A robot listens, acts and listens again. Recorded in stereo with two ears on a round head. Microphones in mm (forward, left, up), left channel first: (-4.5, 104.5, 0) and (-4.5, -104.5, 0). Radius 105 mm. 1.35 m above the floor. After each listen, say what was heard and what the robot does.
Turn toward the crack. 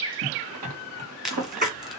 Turn 30° left.
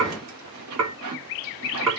Keep listening.
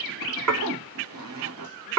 I heard a crack, but can't make it out now. It was about 30° right or 150° left.